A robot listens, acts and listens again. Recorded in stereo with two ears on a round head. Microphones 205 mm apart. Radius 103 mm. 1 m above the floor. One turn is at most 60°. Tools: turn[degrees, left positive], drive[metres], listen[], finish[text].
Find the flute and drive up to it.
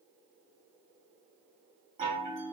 Action: listen[]
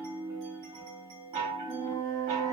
Thought: The flute: about 25° left or 155° left.
Action: turn[25]
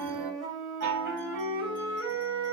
Action: drive[1.0]
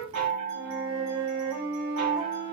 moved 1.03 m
Action: drive[1.0]
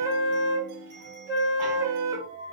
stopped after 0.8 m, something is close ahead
Thought: The flute is now 15° right.
Action: turn[-15]
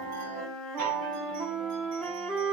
Action: finish[I am next to the flute.]